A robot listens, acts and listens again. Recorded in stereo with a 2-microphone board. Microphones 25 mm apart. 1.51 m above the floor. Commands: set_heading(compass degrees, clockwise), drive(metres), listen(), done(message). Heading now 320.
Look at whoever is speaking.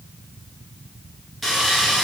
listen()
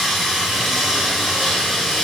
listen()
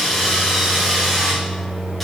done("I can't make out anyone speaking to turn to.")